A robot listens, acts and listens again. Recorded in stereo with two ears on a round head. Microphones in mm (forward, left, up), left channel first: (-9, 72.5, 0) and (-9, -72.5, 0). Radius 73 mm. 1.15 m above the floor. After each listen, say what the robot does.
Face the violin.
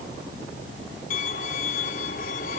Turn 55° left.
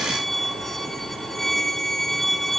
Facing the violin, 1 to 2 m away.